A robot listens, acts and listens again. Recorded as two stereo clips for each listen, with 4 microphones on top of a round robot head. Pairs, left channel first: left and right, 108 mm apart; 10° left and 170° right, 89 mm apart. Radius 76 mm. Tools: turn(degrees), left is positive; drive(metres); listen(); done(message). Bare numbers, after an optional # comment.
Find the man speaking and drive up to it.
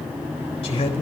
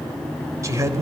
# The man speaking: 140° left.
turn(140)
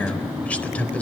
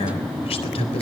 # The man speaking is now 15° left.
turn(15)
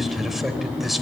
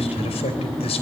drive(1.0)
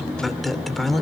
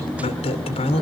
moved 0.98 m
drive(1.0)
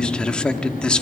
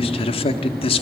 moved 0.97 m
# The man speaking is now 10° left.
turn(10)
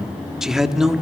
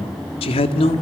drive(1.0)
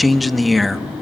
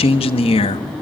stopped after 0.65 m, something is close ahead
done("Arrived at the man speaking, straight ahead.")